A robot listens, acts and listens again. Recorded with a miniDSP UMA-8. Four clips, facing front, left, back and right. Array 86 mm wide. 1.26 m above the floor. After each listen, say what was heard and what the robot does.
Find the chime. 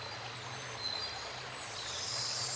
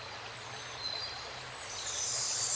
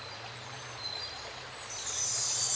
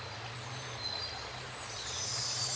The chime: 170° right. Turn 170° right.
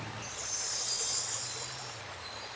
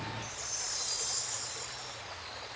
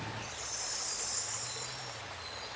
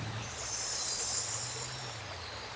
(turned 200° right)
The chime is now 30° left. Turn 30° left.
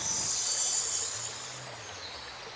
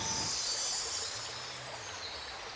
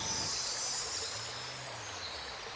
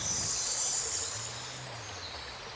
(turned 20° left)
The chime is now 10° left. Turn 10° left.
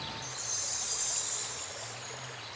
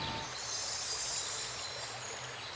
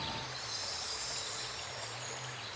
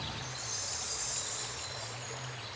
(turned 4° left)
Found it: a chime, straight ahead, 1 to 2 m away.